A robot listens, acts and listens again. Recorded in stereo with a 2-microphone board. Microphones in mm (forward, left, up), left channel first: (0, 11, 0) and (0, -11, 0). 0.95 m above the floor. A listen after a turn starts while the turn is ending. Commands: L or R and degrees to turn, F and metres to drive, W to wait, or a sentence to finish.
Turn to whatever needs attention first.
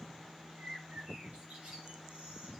W
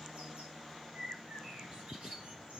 W
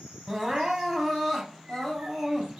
R20
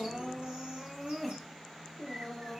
Found it: crying, straight ahead, 2 to 4 m away.